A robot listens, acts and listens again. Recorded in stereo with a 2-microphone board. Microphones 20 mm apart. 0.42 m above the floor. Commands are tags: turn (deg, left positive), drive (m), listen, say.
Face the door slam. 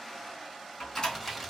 <turn deg="45"/>
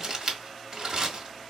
<listen/>
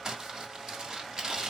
<say>I heard a door slam, but can't make it out now. It was about straight ahead or 90° left.</say>